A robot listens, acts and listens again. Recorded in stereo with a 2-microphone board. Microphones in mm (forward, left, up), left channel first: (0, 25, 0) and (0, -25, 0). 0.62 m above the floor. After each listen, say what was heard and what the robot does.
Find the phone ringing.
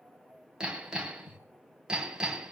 Keep listening.
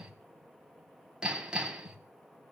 Keep listening.
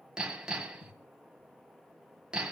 I can't make out a phone ringing, only hammering.